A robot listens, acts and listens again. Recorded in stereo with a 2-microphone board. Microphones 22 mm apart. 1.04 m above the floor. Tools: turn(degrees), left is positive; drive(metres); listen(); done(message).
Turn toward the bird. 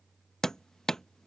listen()
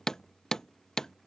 listen()
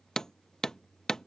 done("I can't make out a bird to turn to.")